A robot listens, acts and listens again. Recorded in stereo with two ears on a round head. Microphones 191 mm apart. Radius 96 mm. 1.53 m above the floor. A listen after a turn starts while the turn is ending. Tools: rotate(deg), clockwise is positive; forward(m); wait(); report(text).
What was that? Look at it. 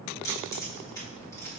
rotate(-30)
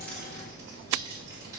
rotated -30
wait()
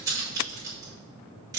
rotate(15)
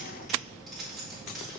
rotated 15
report("Facing the keys jangling.")